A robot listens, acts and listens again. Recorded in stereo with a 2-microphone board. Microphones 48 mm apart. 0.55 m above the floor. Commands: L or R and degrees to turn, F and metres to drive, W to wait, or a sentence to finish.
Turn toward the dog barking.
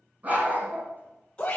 R40
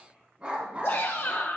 R25
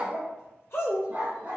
R30
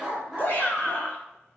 Facing the dog barking.